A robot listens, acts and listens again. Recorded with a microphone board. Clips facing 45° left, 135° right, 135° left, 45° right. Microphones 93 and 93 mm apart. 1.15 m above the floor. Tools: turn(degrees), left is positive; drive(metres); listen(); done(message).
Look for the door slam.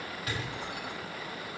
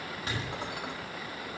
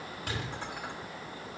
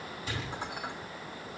turn(degrees=160)
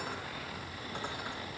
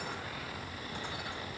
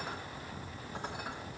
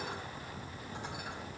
done("I heard a door slam from this way, but can't make it out now.")